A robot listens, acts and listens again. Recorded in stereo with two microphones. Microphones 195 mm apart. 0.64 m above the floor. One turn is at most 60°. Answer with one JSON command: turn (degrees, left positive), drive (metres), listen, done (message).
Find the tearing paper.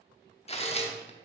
{"turn": 35}
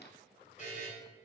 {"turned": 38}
{"listen": true}
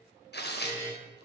{"turn": 60}
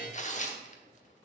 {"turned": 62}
{"turn": 45}
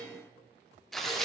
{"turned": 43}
{"done": "Facing the tearing paper."}